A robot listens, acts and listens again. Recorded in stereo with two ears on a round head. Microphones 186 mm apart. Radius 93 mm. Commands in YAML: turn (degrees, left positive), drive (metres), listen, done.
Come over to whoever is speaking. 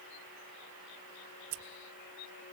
listen: true
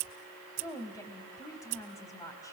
turn: 15
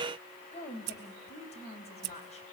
turn: 150
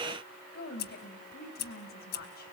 turn: 50
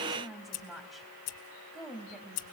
drive: 1.0
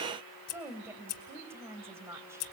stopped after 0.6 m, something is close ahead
turn: -10
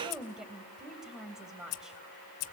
done: "Something is in my way. I am facing the woman speaking but have not reached it."